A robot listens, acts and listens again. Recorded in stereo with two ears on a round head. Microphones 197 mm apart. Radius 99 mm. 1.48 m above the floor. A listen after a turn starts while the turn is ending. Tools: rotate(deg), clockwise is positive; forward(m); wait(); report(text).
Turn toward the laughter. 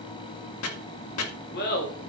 rotate(-45)
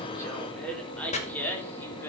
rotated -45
rotate(-10)
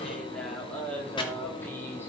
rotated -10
rotate(-10)
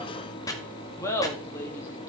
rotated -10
rotate(-10)
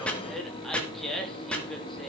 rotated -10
report("Found it: laughter, straight ahead, 2 to 4 m away.")